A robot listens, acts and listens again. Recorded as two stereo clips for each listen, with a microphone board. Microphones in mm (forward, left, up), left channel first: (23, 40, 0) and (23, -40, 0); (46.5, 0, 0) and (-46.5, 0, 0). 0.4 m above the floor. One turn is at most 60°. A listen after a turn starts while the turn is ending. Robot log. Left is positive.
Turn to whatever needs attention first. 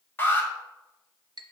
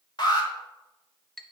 note: The alarm: 30° left.
cmd yaw +30
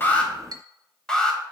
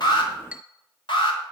note: The alarm is now 10° left.
cmd yaw +10
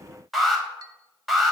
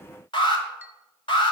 end: Facing the alarm, 1 to 2 m away.